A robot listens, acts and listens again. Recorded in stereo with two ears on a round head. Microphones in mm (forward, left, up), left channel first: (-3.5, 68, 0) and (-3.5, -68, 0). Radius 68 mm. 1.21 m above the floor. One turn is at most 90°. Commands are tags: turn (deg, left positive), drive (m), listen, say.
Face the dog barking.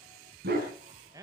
<turn deg="-65"/>
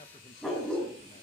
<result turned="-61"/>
<say>Facing the dog barking.</say>